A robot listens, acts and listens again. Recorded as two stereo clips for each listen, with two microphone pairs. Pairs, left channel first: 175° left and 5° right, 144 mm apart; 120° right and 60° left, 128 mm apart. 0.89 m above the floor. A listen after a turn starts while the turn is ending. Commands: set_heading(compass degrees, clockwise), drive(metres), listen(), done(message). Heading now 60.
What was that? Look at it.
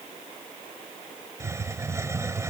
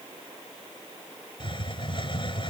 set_heading(135)
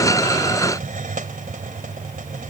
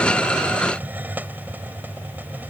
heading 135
set_heading(150)
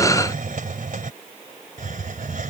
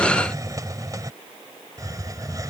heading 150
done("Facing the hiss.")